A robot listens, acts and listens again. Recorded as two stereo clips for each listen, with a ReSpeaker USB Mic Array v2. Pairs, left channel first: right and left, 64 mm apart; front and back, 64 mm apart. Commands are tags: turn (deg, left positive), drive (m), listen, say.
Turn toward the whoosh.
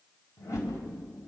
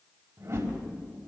<turn deg="-130"/>
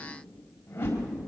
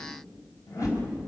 <turn deg="-35"/>
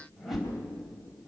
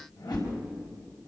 <say>Facing the whoosh.</say>